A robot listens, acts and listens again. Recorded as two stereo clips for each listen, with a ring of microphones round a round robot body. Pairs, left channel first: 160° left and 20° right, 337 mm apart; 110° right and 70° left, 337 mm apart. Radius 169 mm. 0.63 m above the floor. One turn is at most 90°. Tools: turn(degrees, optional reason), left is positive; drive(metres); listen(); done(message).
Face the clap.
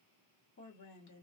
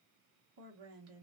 listen()
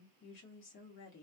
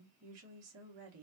listen()
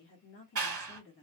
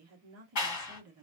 turn(degrees=-70, reason="The clap: 70° right.")
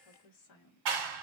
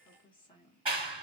done("Found it: a clap, straight ahead.")